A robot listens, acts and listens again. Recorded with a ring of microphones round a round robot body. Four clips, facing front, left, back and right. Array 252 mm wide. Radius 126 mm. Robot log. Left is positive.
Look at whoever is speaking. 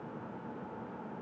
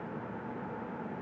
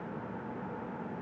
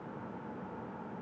cmd idle
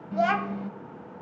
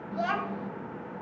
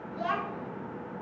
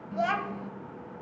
end: Found it: a child speaking, straight ahead.